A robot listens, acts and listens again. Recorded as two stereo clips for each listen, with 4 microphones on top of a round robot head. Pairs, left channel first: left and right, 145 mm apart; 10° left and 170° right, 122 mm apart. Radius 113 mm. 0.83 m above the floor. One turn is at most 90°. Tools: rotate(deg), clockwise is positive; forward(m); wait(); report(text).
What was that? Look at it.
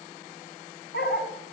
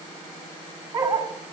rotate(-90)
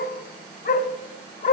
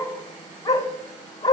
rotate(-65)
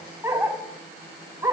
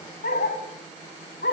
rotate(15)
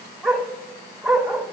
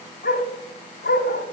report("Facing the dog barking.")